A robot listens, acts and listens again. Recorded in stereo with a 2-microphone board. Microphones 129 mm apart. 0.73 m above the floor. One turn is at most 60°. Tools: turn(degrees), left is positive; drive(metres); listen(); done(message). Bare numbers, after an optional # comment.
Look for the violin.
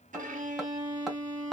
# The violin: about 65° right or 115° right.
turn(-60)
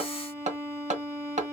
# So it is at 20° right.
turn(-20)
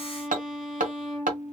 done("Facing the violin, 1 to 2 m away.")